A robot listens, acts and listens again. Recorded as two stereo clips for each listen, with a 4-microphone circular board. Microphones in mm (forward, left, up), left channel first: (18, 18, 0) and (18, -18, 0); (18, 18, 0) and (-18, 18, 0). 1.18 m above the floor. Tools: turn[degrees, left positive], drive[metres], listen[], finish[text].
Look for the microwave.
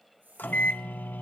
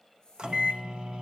Thought: The microwave: 115° left.
Action: turn[115]
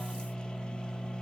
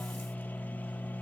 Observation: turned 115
Thought: The microwave is now 20° left.
Action: turn[20]
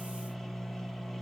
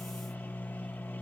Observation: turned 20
Action: finish[Facing the microwave, under 1 m away.]